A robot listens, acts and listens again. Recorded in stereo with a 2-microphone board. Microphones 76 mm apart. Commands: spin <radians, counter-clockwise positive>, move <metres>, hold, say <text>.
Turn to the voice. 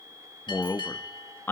spin 0.52
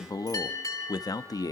spin 2.09
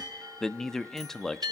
say Facing the man speaking.